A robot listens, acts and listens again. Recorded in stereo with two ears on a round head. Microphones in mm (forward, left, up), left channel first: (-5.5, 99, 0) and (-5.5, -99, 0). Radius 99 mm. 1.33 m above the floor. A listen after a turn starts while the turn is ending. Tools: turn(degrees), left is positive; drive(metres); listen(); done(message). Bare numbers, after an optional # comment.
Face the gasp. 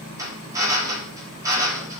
listen()
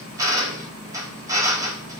listen()
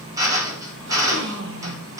# The gasp: about 60° right or 120° right.
turn(-60)
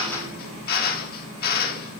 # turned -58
listen()
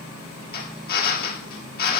done("I heard a gasp, but can't make it out now. It was about straight ahead or 65° right.")